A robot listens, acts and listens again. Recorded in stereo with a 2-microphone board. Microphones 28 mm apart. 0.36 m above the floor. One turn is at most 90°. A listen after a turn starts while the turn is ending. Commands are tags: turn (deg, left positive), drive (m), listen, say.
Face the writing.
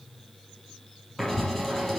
<turn deg="30"/>
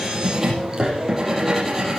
<turn deg="-15"/>
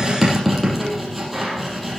<say>Facing the writing, over 4 m away.</say>